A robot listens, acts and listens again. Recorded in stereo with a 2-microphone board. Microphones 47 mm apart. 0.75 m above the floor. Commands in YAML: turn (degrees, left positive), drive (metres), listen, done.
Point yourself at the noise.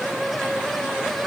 listen: true
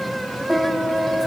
turn: 30
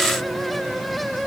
listen: true
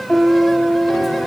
turn: 150
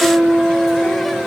turn: 30
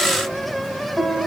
turn: 20
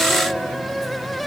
listen: true
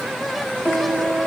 done: "Facing the piano."